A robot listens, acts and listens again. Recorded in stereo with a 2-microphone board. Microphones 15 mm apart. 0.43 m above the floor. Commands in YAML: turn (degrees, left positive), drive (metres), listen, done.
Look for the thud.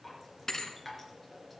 turn: 25
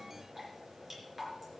listen: true
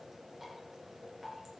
done: "I heard a thud, but can't make it out now. It was about straight ahead or 130° left."